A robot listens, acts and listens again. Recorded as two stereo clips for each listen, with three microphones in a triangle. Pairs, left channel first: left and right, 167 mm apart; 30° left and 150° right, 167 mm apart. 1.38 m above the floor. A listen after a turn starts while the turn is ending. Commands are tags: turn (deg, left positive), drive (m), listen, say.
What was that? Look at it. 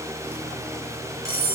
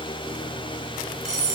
<turn deg="-20"/>
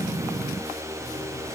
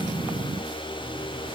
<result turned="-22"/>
<listen/>
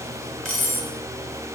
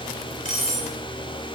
<say>Found it: cutlery clinking, straight ahead, 2 to 4 m away.</say>